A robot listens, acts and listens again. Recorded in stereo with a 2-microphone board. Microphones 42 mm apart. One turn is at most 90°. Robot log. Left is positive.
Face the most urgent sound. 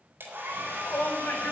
note: The shout: about 60° left or 120° left.
cmd yaw +60
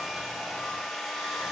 cmd idle
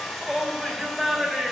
end: Facing the shout.